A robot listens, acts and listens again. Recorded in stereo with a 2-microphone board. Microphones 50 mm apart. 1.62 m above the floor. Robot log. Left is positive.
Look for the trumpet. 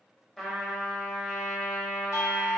cmd yaw +30
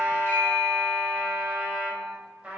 note: So it is at 25° right.
cmd yaw -25
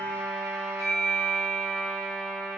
note: The trumpet is now 15° left.
cmd yaw +15
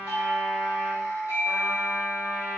end: Found it: a trumpet, straight ahead.